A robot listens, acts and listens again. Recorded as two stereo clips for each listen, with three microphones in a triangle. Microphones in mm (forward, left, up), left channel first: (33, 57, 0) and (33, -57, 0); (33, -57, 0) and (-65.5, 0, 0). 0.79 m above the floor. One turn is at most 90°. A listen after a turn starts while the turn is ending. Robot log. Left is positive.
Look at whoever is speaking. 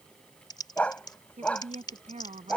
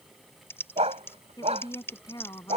note: The woman speaking: 85° right.
cmd yaw -85
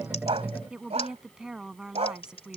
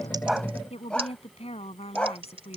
end: Facing the woman speaking.